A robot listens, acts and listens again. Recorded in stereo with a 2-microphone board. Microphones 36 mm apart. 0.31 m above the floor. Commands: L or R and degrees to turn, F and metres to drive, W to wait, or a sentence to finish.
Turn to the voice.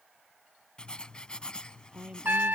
R25
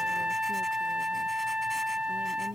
W
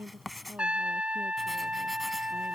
R125
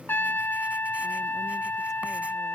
W
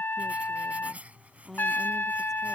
L10
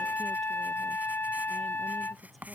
W
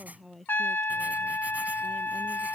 Facing the woman speaking.